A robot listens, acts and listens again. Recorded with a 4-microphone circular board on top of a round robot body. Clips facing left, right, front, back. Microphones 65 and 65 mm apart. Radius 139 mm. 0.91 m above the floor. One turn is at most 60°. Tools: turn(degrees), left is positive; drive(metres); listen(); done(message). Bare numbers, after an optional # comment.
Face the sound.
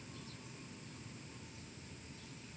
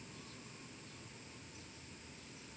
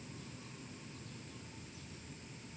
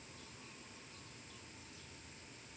listen()
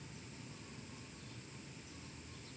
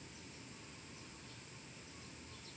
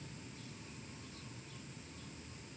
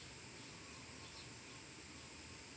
listen()
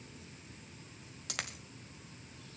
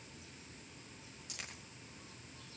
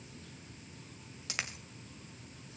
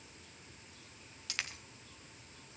# The dropped coin: 70° left.
turn(60)
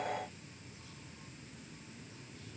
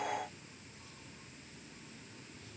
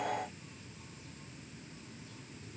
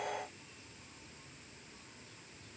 # Nothing new. It was at 10° left.
turn(10)
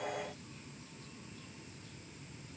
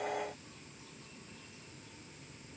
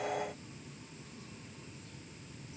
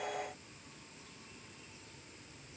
done("I heard a dropped coin from this way, but can't make it out now.")